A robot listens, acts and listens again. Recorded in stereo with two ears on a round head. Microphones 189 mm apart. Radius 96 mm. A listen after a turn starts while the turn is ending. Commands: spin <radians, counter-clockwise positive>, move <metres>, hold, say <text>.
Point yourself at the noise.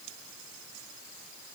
hold
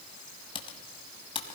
spin 0.44
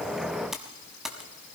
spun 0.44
say Facing the typing on a keyboard, 1 to 2 m away.